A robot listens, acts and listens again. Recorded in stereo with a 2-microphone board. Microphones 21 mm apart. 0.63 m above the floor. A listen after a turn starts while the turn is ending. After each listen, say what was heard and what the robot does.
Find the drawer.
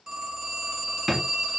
Turn 30° right.
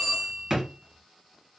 So it is at 140° right. Turn 140° right.
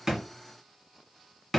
The drawer is now 15° left. Turn 15° left.
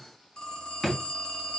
The drawer is now 10° left. Turn 10° left.
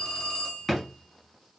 Facing the drawer.